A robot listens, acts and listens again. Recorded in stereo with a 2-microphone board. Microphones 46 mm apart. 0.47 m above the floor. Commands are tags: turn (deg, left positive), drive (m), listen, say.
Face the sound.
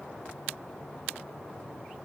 <listen/>
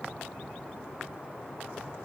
<listen/>
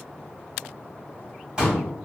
<turn deg="-20"/>
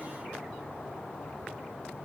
<listen/>
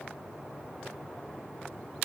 <say>I heard a pop, but can't make it out now. It was about straight ahead or 140° right.</say>